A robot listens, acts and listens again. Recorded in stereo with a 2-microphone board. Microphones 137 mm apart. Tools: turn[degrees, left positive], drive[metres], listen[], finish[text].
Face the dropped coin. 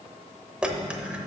Action: turn[-30]
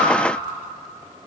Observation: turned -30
Action: listen[]
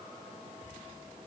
Action: finish[I heard a dropped coin, but can't make it out now. It was about 20° left or 140° right.]